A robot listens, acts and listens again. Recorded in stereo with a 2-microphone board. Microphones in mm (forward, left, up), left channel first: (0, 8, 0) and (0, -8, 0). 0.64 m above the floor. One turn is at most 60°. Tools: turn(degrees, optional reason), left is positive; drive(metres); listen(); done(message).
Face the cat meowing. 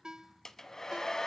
listen()
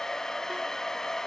listen()
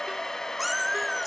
turn(degrees=-30)
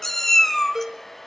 turn(degrees=30, reason="So it is at 30° left.")
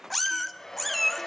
turn(degrees=10, reason="The cat meowing is now 10° left.")
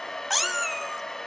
done("Found it: a cat meowing, straight ahead, 1 to 2 m away.")